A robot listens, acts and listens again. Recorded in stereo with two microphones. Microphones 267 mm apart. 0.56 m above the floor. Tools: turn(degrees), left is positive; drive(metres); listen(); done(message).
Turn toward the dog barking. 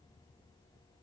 listen()
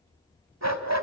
turn(degrees=-90)
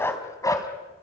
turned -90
turn(degrees=15)
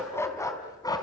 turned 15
turn(degrees=15)
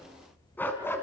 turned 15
turn(degrees=10)
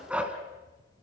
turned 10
done("Facing the dog barking.")